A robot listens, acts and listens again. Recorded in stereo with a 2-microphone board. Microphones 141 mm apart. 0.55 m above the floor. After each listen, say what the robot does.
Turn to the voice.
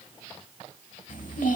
Turn 70° left.
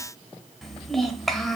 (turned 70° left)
Found it: a child speaking, straight ahead.